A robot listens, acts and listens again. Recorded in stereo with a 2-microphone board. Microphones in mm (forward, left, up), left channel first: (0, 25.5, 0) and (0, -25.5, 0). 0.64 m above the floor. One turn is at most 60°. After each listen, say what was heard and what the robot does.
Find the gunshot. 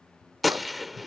Turn 30° left.
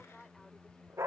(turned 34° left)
Keep listening.
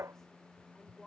I heard a gunshot, but can't make it out now. It was about 35° right or 145° left.